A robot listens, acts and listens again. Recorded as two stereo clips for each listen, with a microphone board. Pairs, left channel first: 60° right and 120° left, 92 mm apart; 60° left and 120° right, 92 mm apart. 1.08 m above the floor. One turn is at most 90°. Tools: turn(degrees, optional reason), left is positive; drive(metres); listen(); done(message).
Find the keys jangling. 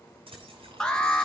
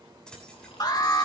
turn(degrees=90, reason="The keys jangling: 140° left.")
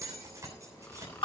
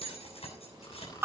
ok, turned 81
turn(degrees=60, reason="The keys jangling is now 60° left.")
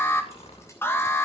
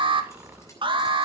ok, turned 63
listen()
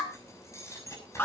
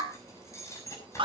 done("Found it: keys jangling, straight ahead, over 4 m away.")